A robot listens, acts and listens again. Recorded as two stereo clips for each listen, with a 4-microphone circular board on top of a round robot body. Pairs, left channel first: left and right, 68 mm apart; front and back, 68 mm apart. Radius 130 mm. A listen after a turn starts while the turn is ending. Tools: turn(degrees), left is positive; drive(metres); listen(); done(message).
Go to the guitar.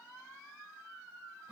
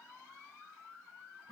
listen()
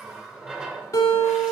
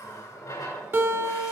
turn(degrees=135)
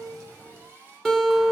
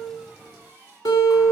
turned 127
drive(metres=1.0)
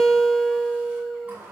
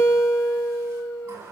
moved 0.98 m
drive(metres=1.0)
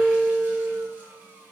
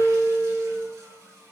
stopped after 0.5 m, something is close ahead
turn(degrees=10)
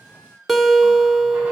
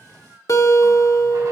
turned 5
done("I am next to the guitar.")